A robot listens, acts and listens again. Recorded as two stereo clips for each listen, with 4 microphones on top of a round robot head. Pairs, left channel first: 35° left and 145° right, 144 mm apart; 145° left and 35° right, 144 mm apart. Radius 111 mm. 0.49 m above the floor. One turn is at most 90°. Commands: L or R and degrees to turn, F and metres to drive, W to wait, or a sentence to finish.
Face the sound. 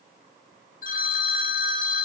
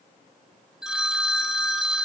L50
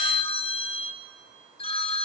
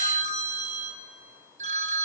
R10
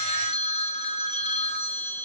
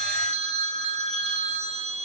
Found it: a phone ringing, straight ahead.